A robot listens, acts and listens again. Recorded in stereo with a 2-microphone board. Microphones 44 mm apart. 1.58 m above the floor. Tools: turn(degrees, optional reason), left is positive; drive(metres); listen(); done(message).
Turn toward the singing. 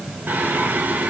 turn(degrees=-45, reason="The singing: about 45° right or 135° right.")
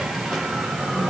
done("Found it: singing, straight ahead.")